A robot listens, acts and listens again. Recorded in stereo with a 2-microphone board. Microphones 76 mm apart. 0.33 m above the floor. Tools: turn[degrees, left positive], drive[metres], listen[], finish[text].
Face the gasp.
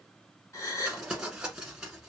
Thought: The gasp: about 40° left or 140° left.
Action: turn[40]
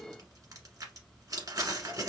Action: listen[]
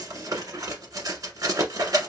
Action: finish[I heard a gasp, but can't make it out now. It was about straight ahead or 100° left.]